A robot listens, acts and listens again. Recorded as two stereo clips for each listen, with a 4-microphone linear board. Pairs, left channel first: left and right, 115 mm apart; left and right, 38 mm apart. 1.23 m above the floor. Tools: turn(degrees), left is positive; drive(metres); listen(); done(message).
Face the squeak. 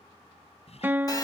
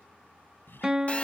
turn(degrees=65)
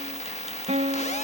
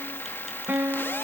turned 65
listen()
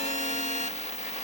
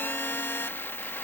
listen()
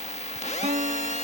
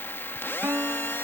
done("I heard a squeak, but can't make it out now. It was about straight ahead or 50° left.")